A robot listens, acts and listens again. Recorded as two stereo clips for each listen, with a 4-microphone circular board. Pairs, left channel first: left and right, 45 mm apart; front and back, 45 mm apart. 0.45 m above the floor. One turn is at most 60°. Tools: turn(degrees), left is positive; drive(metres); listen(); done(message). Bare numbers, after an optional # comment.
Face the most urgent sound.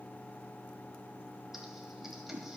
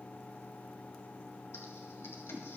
listen()
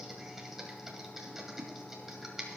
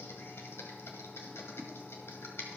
listen()
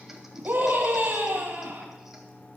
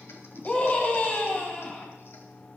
# The scream: 60° right.
turn(-60)
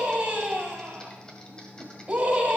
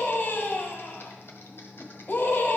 # The scream is now 35° right.
turn(-35)
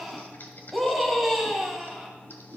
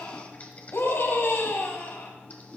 done("Facing the scream, 2 to 4 m away.")